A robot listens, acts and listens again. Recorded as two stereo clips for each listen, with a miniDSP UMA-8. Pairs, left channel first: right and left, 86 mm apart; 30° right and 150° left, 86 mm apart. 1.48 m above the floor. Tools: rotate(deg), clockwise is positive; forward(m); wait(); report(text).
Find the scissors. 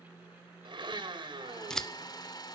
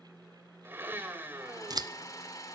rotate(175)
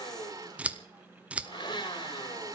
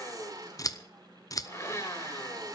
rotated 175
rotate(-15)
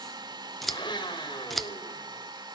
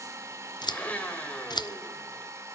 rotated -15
report("Found it: scissors, straight ahead.")